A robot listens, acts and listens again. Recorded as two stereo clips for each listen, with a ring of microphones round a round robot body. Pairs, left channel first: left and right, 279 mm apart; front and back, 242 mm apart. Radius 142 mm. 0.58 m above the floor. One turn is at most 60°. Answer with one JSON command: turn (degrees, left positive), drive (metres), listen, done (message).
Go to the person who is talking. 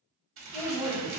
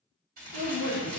{"turn": -20}
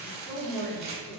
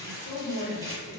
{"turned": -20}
{"drive": 1.0}
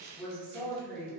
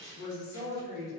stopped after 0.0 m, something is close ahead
{"done": "Blocked. The woman speaking is further on, straight ahead."}